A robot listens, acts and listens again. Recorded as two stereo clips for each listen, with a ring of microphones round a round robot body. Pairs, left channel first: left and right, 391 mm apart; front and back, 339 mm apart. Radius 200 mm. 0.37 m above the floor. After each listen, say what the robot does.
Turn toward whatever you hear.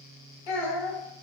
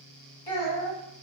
Turn 80° left.
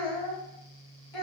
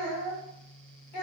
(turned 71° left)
Turn 10° left.
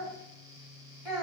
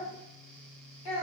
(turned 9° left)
Facing the child speaking, 1 to 2 m away.